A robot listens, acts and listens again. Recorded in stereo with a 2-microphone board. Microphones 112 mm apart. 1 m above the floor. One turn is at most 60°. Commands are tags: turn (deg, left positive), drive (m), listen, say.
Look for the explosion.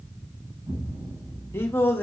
<turn deg="-40"/>
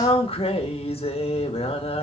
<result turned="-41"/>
<listen/>
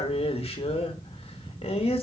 <say>I heard an explosion, but can't make it out now. It was about straight ahead or 100° right.</say>